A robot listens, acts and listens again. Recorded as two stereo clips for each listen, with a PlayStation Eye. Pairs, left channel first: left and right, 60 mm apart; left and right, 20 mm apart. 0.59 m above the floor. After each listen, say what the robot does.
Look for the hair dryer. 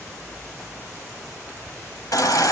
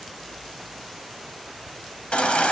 Keep listening.
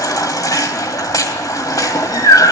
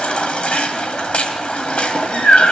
Keep listening.
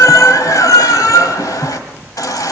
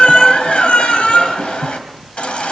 I can't make out a hair dryer to turn to.